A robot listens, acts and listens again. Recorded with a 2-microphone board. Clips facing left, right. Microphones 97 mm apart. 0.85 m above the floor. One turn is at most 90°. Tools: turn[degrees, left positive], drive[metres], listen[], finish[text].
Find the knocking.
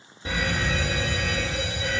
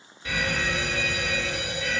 Action: listen[]
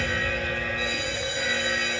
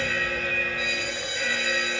Action: listen[]
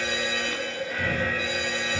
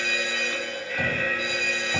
Thought: The knocking: about 75° right or 105° right.
Action: turn[-75]
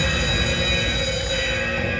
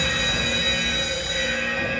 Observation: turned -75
Action: listen[]
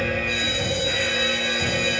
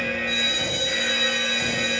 Action: finish[Facing the knocking, 2 to 4 m away.]